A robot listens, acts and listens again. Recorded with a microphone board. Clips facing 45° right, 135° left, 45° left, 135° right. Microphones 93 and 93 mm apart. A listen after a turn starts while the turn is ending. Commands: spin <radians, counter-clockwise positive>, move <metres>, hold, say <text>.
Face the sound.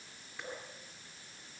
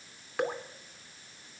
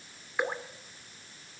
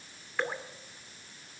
spin 2.09
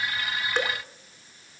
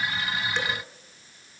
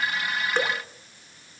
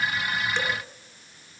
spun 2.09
say Found it: dripping, straight ahead.